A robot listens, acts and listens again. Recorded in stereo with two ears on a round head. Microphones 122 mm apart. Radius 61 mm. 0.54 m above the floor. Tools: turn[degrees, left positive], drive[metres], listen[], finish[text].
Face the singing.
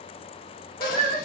Thought: The singing: about 35° left or 145° left.
Action: turn[35]
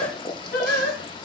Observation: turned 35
Thought: So it is at 105° left.
Action: turn[105]
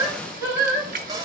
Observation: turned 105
Thought: The singing is now 25° right.
Action: turn[-25]
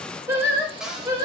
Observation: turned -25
Thought: The singing is now 25° right.
Action: turn[-25]
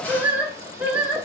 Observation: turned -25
Thought: The singing is now 10° right.
Action: turn[-10]
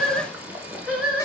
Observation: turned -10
Action: finish[Found it: singing, straight ahead.]